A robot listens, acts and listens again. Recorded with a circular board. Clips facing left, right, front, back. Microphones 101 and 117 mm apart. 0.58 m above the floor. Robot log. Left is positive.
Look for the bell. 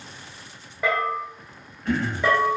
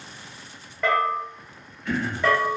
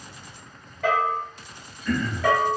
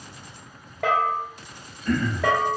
note: The bell: 170° left.
cmd yaw +170
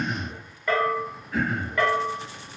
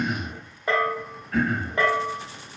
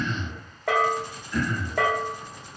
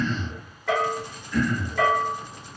note: The bell is now 25° right.
cmd yaw -25
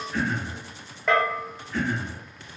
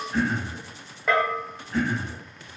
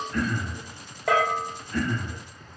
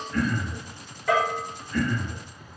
end: Found it: a bell, straight ahead, under 1 m away.